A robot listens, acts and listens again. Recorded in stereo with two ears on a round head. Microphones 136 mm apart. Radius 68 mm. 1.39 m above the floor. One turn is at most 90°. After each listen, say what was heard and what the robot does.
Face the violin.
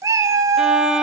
Turn 30° right.
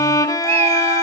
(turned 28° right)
So it is at 20° left. Turn 20° left.
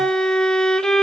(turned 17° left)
Facing the violin, 1 to 2 m away.